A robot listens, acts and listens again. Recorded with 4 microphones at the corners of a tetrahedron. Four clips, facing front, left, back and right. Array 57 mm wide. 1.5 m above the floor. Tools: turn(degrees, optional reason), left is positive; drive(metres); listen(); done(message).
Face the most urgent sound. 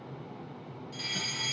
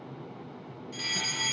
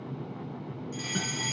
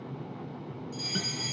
turn(degrees=105, reason="The fire alarm: 105° left.")
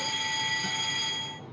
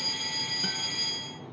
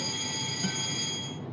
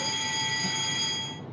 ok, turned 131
turn(degrees=-30, reason="The fire alarm is now 30° right.")
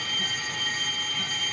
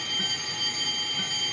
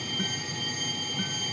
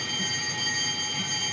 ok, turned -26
done("Facing the fire alarm.")